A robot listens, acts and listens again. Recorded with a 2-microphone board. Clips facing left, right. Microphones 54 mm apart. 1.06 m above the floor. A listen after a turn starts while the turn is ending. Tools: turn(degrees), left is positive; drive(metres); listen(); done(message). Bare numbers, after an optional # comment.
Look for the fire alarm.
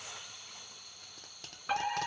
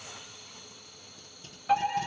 # The fire alarm: about 20° left or 160° left.
turn(20)
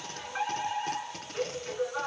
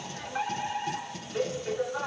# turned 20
done("Found it: a fire alarm, straight ahead, 2 to 4 m away.")